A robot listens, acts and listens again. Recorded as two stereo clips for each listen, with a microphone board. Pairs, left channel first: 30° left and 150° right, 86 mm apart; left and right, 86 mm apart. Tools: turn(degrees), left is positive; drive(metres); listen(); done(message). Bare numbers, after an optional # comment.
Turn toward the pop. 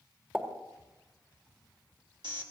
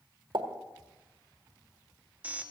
# The pop: 80° right.
turn(-80)
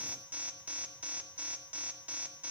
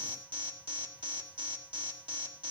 done("Facing where the pop came from. I can't hear it now.")